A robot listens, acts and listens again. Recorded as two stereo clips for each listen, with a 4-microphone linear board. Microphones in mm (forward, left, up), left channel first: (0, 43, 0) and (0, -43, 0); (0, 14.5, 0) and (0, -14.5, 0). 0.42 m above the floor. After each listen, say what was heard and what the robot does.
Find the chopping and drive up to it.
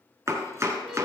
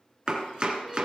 The chopping: about 30° right or 150° right. Turn 30° right.
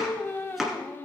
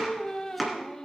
Drive 1.0 m forward.
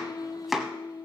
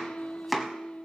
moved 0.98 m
Drive 1.0 m forward.
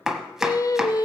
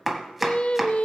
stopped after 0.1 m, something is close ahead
I am next to the chopping.